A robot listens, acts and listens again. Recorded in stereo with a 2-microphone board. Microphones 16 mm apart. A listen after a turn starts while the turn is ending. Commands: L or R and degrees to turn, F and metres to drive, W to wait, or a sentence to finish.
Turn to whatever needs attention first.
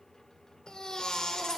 L65
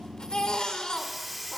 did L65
L55
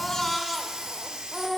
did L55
Found it: a baby crying, straight ahead.